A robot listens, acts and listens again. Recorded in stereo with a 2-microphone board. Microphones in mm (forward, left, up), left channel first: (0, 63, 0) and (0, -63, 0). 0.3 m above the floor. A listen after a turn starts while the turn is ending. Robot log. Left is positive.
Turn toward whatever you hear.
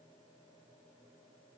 cmd idle
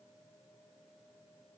cmd idle
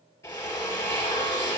note: The drill: about 25° left or 155° left.
cmd yaw +25
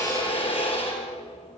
note: So it is at 130° left.
cmd yaw +130
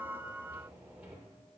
cmd idle
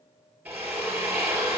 note: The drill is now 15° right.
cmd yaw -15
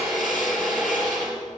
end: Found it: a drill, straight ahead, 2 to 4 m away.